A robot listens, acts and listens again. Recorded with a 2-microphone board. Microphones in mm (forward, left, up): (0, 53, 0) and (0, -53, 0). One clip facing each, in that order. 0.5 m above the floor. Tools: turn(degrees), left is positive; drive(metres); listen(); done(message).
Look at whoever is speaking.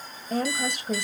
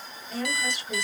turn(degrees=50)
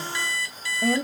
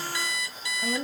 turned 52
turn(degrees=70)
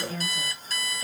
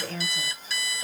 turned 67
done("Facing the woman speaking.")